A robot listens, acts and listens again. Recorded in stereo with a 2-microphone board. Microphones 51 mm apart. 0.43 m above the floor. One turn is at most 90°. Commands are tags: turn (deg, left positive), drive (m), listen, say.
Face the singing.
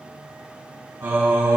<turn deg="-60"/>
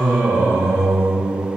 <turn deg="-55"/>
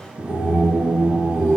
<turn deg="-10"/>
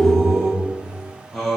<say>Facing the singing.</say>